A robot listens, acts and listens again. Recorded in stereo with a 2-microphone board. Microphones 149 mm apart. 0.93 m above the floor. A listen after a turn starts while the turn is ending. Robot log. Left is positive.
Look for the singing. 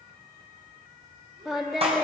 cmd yaw -30
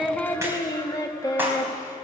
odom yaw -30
note: So it is at 25° left.
cmd yaw +25
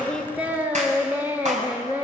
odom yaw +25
note: The singing is now 15° right.
cmd yaw -15
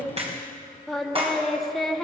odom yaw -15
end: Facing the singing, 1 to 2 m away.